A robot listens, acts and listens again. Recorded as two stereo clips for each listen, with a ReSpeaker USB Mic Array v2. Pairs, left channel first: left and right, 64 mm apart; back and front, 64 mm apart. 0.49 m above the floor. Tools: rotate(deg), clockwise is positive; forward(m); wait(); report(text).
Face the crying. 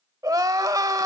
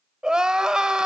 rotate(75)
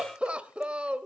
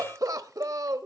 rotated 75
rotate(20)
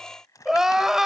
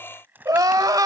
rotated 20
report("Found it: crying, straight ahead.")